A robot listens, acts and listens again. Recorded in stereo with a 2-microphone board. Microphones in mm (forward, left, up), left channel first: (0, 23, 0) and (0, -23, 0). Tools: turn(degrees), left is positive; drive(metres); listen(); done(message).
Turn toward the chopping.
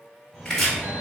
turn(degrees=30)
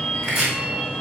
turn(degrees=-20)
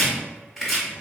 done("Facing the chopping, 1 to 2 m away.")